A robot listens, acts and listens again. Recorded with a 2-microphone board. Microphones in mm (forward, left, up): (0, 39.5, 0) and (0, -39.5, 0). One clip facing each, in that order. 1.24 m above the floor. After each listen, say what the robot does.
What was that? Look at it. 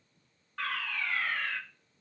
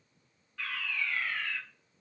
Turn 55° left.
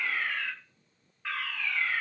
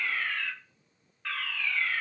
Turn 10° left.
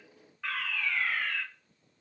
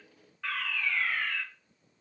Facing the fire alarm.